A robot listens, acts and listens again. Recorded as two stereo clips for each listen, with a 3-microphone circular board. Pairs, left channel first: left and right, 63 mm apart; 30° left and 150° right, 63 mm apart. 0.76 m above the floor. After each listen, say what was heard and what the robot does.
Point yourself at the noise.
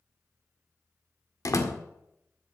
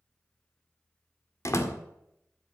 The door slam: 65° left. Turn 65° left.
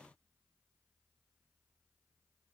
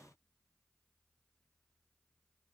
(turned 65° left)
I heard a door slam from this way, but can't make it out now.